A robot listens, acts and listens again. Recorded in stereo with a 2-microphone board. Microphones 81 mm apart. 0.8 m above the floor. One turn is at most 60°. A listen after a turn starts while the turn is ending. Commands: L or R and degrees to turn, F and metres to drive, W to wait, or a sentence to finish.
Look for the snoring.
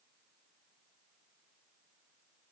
W
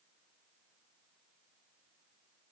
W
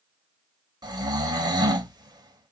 R55
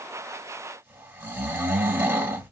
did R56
R30
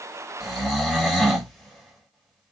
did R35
Found it: snoring, straight ahead.